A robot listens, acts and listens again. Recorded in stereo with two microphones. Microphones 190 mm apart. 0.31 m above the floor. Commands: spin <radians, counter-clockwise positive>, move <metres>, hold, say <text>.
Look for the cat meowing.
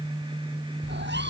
spin -1.22
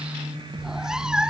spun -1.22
say Facing the cat meowing.